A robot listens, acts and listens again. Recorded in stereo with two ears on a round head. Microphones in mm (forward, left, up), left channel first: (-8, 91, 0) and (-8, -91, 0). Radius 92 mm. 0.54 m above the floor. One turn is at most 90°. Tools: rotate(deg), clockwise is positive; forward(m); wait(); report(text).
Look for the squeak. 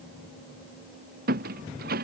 rotate(50)
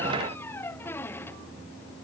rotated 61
rotate(-10)
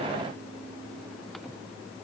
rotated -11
wait()
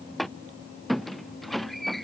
report("Found it: a squeak, straight ahead.")